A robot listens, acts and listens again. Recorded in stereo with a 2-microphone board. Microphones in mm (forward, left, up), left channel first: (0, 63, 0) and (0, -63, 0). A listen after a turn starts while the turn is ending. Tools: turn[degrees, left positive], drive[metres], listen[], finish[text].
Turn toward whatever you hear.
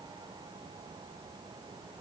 Action: listen[]
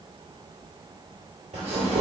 Thought: The tearing paper: about 60° right or 120° right.
Action: turn[-60]
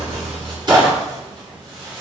Thought: So it is at 40° right.
Action: turn[-40]
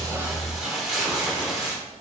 Action: finish[Found it: tearing paper, straight ahead.]